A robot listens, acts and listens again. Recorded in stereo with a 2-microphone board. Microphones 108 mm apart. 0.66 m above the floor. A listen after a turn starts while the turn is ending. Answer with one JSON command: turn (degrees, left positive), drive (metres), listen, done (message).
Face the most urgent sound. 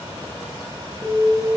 {"turn": 30}
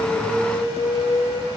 {"turn": 140}
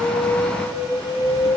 {"turn": 45}
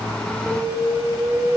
{"done": "Facing the alarm."}